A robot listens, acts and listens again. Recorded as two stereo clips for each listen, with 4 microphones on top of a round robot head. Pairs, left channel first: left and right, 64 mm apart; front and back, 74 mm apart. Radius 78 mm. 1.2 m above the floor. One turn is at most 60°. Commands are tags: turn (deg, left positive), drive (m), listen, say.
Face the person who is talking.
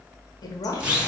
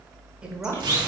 <turn deg="60"/>
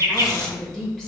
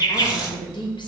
<say>Facing the woman speaking, 1 to 2 m away.</say>